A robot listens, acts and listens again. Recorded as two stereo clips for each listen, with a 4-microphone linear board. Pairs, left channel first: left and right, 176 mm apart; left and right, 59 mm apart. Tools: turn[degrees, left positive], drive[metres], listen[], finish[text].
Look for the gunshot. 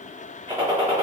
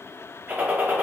Thought: The gunshot: about 30° right or 150° right.
Action: turn[-30]
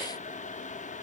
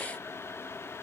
Action: listen[]
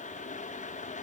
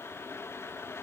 Action: finish[I heard a gunshot, but can't make it out now. It was about straight ahead or 120° right.]